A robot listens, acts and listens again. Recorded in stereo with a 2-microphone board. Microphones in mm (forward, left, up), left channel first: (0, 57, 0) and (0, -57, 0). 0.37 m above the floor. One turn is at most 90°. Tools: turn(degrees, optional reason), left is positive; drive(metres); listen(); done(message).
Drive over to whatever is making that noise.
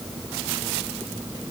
listen()
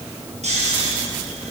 turn(degrees=-75, reason="The snoring: about 75° right or 105° right.")
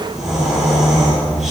drive(metres=1.0)
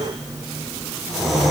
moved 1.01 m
drive(metres=1.0)
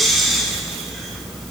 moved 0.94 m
drive(metres=1.0)
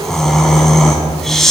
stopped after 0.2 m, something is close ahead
done("I am next to the snoring.")